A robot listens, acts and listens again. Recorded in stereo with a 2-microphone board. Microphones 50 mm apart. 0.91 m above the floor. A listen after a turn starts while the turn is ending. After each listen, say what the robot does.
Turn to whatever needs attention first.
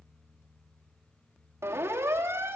Turn 60° right.
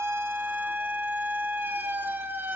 Turn 50° right.
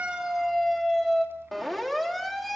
Facing the siren.